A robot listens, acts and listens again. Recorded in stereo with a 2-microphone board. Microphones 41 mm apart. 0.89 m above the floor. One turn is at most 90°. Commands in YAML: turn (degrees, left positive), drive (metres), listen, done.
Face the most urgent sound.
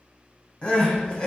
turn: 25
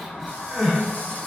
done: "Found it: crying, straight ahead."